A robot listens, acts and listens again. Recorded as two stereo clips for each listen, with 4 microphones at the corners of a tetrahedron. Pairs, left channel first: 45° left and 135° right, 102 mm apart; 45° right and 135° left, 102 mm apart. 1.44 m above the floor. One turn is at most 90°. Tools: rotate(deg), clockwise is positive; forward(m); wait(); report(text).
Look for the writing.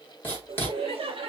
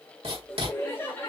rotate(-90)
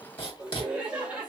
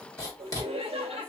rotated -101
rotate(-15)
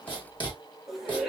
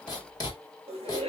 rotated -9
report("Found it: writing, straight ahead, 2 to 4 m away.")